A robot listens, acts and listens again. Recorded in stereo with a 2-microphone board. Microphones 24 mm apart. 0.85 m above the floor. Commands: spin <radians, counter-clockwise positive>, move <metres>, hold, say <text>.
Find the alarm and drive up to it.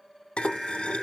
spin 0.52
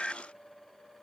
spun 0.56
spin 2.62
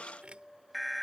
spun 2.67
move 1.0
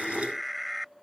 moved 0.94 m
move 1.0
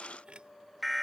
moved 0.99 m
move 1.0
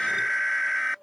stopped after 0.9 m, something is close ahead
say Arrived at the alarm, straight ahead.